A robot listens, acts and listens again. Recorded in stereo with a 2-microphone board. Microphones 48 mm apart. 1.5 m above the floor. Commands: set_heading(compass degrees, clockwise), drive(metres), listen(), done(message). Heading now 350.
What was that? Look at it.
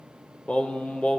set_heading(325)
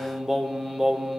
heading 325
done("Found it: singing, straight ahead, 1 to 2 m away.")